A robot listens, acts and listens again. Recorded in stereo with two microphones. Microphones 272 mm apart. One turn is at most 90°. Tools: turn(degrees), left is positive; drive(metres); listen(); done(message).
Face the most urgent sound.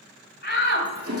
turn(degrees=40)
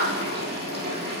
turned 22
turn(degrees=90)
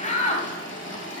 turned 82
turn(degrees=30)
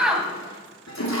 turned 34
done("Found it: a shout, straight ahead, 2 to 4 m away.")